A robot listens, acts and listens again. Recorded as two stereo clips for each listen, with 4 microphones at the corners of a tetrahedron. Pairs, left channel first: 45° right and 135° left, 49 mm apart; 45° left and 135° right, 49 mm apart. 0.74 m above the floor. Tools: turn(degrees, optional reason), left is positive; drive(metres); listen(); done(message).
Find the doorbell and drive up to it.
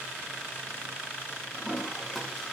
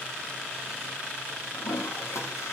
listen()
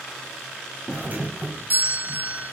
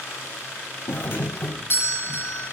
turn(degrees=80, reason="The doorbell: 80° left.")
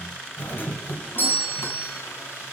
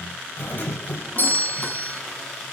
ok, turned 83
drive(metres=1.0)
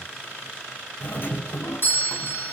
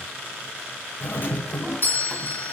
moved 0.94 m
drive(metres=1.0)
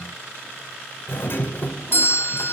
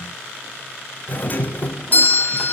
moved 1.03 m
drive(metres=1.0)
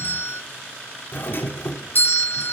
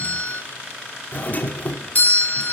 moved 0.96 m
drive(metres=1.0)
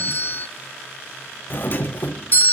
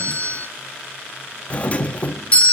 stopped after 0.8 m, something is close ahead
turn(degrees=-10, reason="The doorbell is now 10° right.")
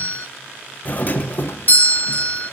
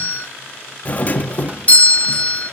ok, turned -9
done("Arrived at the doorbell, straight ahead.")